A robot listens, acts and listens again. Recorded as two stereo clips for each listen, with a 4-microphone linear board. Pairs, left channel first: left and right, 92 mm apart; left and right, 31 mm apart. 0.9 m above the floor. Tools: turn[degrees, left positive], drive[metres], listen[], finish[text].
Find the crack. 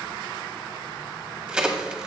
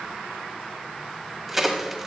Action: turn[-30]
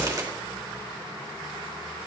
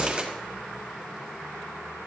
Action: listen[]
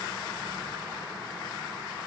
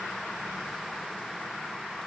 Action: finish[I heard a crack, but can't make it out now. It was about 20° left or 140° right.]